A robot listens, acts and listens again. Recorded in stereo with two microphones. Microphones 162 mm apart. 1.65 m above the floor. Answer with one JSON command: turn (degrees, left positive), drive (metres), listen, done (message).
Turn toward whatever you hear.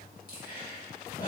{"turn": 65}
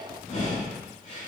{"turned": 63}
{"turn": 55}
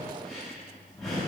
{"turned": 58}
{"done": "Facing the breathing, 2 to 4 m away."}